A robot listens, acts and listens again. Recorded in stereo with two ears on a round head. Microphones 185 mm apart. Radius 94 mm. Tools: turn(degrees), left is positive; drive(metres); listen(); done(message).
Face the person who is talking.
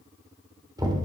listen()
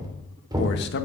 turn(degrees=60)
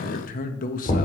turn(degrees=45)
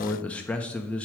turn(degrees=10)
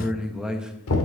done("Found it: a man speaking, straight ahead, 1 to 2 m away.")